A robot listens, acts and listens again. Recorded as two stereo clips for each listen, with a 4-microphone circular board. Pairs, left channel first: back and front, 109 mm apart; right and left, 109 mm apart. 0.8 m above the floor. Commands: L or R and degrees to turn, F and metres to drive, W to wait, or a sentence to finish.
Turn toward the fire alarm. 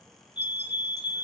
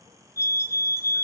L145
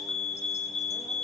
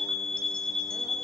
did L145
Found it: a fire alarm, straight ahead.